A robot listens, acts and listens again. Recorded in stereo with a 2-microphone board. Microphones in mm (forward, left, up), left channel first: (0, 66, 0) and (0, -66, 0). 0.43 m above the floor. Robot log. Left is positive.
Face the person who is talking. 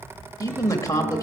note: The man speaking: about 25° left or 155° left.
cmd yaw +25
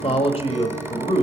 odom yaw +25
note: So it is at 120° left.
cmd yaw +120
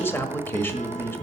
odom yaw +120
note: The man speaking is now 20° left.
cmd yaw +20
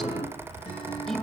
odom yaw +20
cmd idle
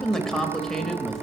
end: Facing the man speaking, 1 to 2 m away.